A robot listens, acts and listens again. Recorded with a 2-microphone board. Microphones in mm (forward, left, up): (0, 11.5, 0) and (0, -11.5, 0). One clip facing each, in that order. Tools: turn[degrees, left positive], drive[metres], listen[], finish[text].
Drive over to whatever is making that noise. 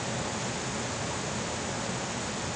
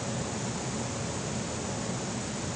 Action: listen[]
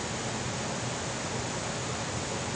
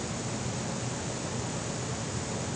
Action: listen[]
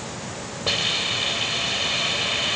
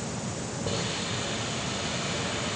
Action: turn[90]
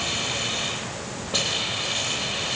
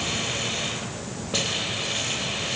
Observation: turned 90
Thought: So it is at 10° right.
Action: turn[-10]
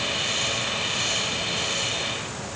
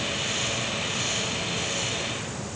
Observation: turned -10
Action: drive[1.0]
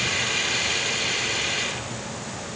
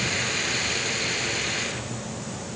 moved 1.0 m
Action: drive[1.0]
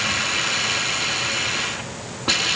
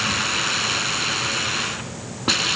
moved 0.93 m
Thought: The hiss is now 10° right.
Action: turn[-10]
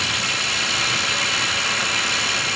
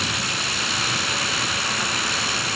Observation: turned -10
Action: drive[1.0]
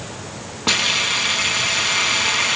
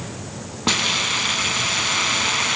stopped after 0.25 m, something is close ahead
Action: finish[Arrived at the hiss, straight ahead.]